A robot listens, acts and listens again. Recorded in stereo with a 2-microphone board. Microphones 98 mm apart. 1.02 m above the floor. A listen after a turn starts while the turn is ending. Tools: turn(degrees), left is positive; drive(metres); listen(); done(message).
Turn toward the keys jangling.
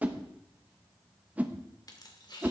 turn(degrees=45)
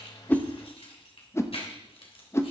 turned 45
turn(degrees=75)
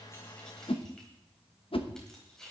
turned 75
done("Facing the keys jangling.")